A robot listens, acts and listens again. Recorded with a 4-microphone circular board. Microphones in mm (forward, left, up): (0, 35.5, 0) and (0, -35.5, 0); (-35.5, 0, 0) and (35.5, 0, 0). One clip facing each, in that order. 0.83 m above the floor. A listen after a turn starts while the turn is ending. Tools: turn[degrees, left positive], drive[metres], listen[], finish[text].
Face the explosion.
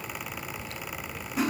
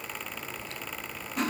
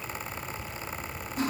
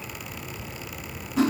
Action: listen[]
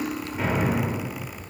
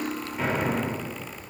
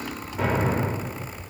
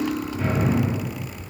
Thought: The explosion: straight behind.
Action: turn[180]
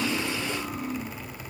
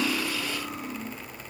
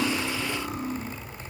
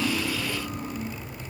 Action: finish[Facing where the explosion came from. I can't hear it now.]